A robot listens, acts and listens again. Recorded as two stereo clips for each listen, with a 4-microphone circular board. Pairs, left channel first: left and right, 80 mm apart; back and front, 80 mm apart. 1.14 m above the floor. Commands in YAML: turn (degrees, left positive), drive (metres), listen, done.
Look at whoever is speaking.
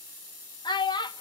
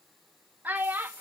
turn: 70
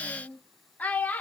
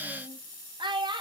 turn: 20
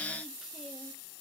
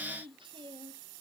listen: true
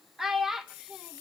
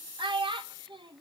done: "Facing the child speaking, 1 to 2 m away."